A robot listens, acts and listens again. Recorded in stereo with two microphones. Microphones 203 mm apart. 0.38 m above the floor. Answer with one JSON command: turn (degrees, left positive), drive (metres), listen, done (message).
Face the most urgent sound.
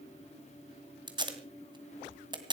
{"listen": true}
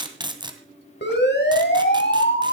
{"turn": 60}
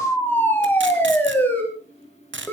{"turn": 10}
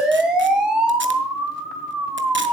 {"done": "Facing the siren, over 4 m away."}